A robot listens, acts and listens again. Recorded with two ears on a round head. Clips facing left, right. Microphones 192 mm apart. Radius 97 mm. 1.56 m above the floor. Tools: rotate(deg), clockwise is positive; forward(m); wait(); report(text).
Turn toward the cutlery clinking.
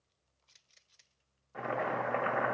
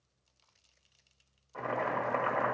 wait()
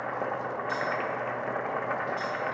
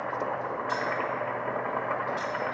wait()
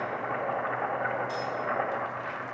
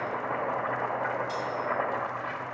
report("I can't make out cutlery clinking to turn to.")